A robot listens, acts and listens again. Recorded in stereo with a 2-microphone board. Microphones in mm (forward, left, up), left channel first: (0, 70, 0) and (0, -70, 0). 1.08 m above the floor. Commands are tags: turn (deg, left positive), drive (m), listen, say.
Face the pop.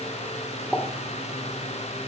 <turn deg="30"/>
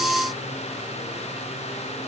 <listen/>
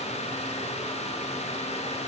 <say>I heard a pop, but can't make it out now. It was about 25° right or 145° left.</say>